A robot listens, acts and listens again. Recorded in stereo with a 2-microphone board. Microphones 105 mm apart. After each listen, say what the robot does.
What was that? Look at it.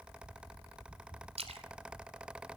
Turn 70° right.
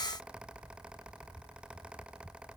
Keep listening.
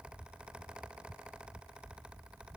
I heard a splash, but can't make it out now. It was about straight ahead or 40° right.